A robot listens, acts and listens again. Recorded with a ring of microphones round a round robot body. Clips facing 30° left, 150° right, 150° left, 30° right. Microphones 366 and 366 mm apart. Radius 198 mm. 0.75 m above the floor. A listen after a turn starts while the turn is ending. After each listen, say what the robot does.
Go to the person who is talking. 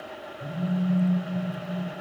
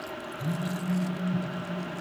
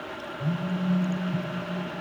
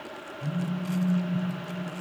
Keep listening.
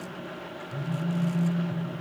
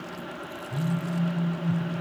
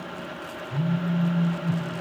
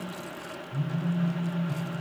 Keep listening.
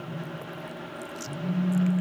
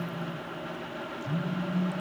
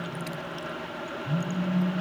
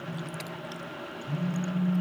I can't make out anyone speaking, only a phone buzzing.